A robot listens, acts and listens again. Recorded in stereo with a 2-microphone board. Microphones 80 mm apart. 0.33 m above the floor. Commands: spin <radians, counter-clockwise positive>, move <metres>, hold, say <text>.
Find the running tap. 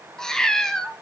hold
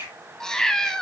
hold
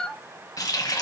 spin 0.87
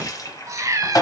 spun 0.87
spin 1.13
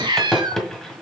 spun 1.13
say Facing the running tap.